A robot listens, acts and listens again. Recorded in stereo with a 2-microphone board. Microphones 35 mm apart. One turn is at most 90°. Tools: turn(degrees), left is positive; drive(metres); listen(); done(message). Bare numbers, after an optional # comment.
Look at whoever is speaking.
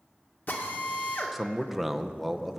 turn(-30)
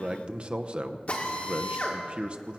# So it is at 145° right.
turn(-90)
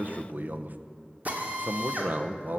# The man speaking is now 55° right.
turn(-55)
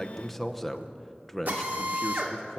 done("Found it: a man speaking, straight ahead.")